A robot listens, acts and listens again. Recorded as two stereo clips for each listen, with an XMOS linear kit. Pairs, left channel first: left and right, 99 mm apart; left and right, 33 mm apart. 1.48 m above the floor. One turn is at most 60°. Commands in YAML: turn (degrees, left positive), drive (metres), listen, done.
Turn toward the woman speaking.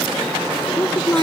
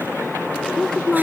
turn: 20
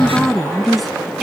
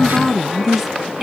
done: "Facing the woman speaking."